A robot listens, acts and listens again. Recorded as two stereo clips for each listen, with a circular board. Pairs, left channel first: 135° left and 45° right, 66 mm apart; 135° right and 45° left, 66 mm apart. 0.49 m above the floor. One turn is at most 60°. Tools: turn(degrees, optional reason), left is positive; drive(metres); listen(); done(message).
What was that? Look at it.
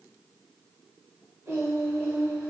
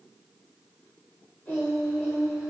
turn(degrees=-60, reason="The singing: 90° right.")
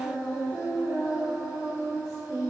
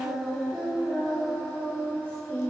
turn(degrees=-60, reason="The singing is now 75° right.")
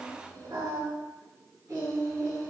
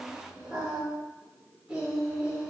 turn(degrees=-30, reason="The singing is now 30° right.")
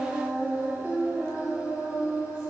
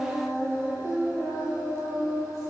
done("Found it: singing, straight ahead, 2 to 4 m away.")